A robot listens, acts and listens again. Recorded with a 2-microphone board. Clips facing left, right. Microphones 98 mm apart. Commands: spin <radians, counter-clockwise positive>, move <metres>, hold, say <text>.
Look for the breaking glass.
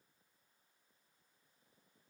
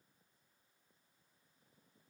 hold
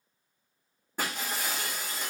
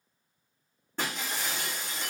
spin 0.52
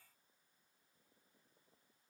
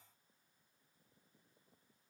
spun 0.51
hold
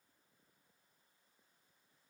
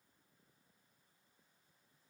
say I heard breaking glass, but can't make it out now. It was about 20° right or 140° left.